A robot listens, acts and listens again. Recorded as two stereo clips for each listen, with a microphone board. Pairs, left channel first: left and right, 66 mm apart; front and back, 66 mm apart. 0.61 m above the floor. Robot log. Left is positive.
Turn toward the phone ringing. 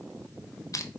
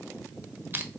cmd idle
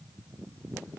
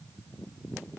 cmd idle
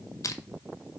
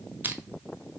end: I can't make out a phone ringing, only crushing.